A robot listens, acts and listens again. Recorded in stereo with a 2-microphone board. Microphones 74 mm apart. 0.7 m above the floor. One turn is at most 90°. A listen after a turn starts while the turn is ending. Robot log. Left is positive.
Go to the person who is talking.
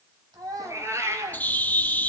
note: The child speaking: about 55° right or 125° right.
cmd yaw -55
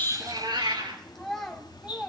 cmd fwd 1.0
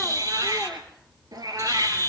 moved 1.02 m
cmd idle
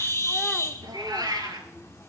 cmd idle
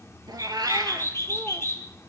end: I heard a child speaking from this way, but can't make it out now. I did not reach it.